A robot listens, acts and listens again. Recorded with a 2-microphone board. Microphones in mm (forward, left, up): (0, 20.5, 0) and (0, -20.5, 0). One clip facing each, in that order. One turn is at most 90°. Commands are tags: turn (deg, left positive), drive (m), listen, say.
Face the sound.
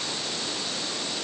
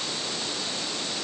<listen/>
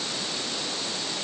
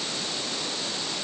<listen/>
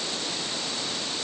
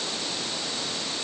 <say>I can't make out anything to turn to.</say>